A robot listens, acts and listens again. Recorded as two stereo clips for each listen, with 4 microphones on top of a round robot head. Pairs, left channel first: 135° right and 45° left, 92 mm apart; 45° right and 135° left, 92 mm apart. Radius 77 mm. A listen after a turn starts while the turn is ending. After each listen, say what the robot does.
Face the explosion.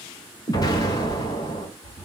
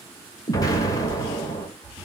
Turn 90° right.
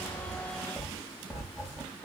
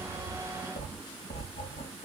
Facing where the explosion came from. I can't hear it now.